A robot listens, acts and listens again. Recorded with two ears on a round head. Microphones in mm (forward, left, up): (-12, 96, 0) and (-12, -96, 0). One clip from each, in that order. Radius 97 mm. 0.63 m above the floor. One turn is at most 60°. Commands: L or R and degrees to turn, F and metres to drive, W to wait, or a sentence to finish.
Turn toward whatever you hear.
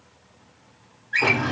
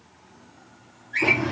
L45
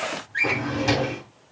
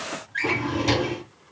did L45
Found it: a drawer, straight ahead, 1 to 2 m away.